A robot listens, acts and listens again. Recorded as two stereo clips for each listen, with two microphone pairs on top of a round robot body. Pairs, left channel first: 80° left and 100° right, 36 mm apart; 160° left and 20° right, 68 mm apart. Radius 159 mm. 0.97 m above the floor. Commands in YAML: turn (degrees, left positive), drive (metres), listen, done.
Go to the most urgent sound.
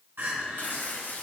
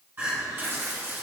turn: -80
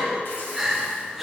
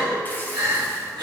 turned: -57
turn: -25
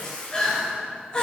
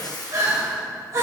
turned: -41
turn: 20
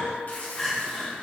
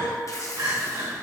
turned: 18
drive: 1.0
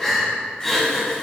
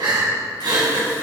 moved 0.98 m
drive: 1.0
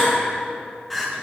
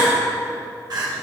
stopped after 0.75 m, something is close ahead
done: "I am next to the crying."